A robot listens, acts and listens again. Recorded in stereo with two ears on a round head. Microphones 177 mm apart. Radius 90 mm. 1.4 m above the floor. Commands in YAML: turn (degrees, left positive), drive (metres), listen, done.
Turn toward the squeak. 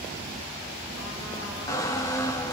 turn: 15
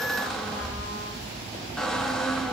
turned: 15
done: "Facing the squeak, 1 to 2 m away."